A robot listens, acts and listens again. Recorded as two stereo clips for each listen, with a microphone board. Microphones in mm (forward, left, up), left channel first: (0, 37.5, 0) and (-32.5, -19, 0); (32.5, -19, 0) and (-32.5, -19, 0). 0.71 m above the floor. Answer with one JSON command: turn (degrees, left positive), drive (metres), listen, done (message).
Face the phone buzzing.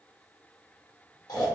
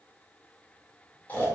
{"listen": true}
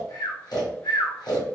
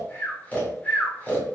{"listen": true}
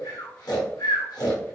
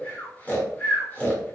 {"done": "I can't make out a phone buzzing to turn to."}